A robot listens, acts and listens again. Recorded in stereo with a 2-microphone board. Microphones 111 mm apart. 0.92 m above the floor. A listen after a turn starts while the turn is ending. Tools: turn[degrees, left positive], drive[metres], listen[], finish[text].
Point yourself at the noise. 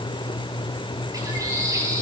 Thought: The bird: about 35° right or 145° right.
Action: turn[-35]
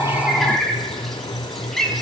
Action: finish[Found it: a bird, straight ahead, over 4 m away.]